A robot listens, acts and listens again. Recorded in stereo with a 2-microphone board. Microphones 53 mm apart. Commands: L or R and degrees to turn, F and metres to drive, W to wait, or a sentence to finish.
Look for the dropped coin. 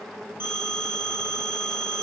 W
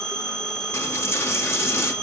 L55
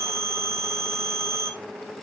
W
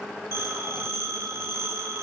I heard a dropped coin, but can't make it out now. It was about straight ahead or 70° left.